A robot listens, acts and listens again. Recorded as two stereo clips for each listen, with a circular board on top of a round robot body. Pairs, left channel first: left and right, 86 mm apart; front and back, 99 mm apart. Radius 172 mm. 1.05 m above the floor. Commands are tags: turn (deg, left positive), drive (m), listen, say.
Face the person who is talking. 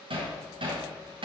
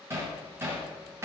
<listen/>
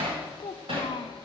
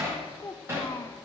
<turn deg="65"/>
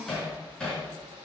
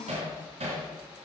<listen/>
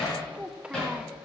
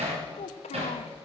<turn deg="-10"/>
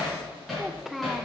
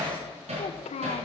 <say>Found it: a child speaking, straight ahead.</say>